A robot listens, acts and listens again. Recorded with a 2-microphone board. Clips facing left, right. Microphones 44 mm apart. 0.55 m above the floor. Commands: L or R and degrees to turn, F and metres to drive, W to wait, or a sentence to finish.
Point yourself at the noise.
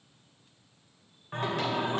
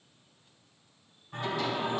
L60
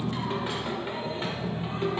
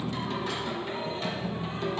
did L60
L30
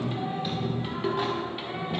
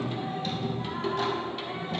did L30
L15
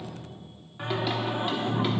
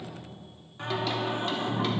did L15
L15
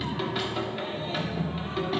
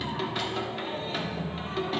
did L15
Facing the singing.